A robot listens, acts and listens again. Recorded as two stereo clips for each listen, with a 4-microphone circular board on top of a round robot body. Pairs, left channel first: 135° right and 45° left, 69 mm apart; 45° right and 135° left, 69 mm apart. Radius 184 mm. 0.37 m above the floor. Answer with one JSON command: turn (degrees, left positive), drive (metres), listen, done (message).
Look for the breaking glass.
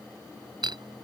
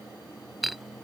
{"turn": 45}
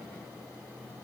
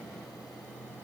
{"done": "I heard breaking glass from this way, but can't make it out now."}